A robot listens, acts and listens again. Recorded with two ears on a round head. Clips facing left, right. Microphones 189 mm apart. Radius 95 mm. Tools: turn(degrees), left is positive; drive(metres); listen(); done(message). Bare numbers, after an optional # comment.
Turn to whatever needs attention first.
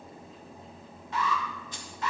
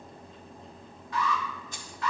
# The alarm: about 20° left or 160° left.
turn(20)
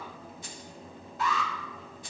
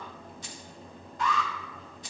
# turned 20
done("Facing the alarm, 1 to 2 m away.")